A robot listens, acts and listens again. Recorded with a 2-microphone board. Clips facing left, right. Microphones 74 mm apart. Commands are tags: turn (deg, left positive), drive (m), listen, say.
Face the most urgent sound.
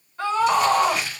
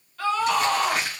<turn deg="25"/>
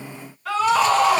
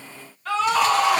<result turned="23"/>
<say>Found it: a scream, straight ahead.</say>